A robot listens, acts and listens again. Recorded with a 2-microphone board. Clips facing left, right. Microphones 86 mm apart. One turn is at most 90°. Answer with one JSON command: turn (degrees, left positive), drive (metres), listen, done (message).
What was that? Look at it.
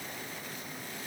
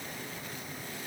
{"listen": true}
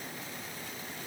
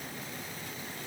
{"listen": true}
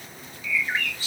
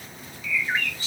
{"turn": 30}
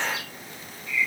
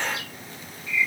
{"turn": 90}
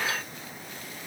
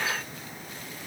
{"turn": 55}
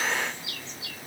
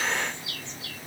{"done": "Found it: a bird, straight ahead."}